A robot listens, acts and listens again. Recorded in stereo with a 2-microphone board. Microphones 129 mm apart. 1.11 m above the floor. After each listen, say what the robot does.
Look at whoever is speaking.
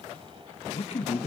Turn 50° left.
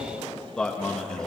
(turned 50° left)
Found it: a man speaking, straight ahead.